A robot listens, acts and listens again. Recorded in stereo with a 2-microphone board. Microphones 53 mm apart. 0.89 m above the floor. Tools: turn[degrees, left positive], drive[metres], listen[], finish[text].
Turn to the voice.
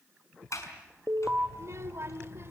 Thought: The child speaking: about 50° right or 130° right.
Action: turn[-50]
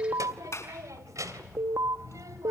Thought: So it is at 80° right.
Action: turn[-80]
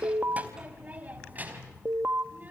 Thought: The child speaking is now 35° right.
Action: turn[-35]
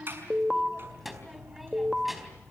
Action: finish[Facing the child speaking.]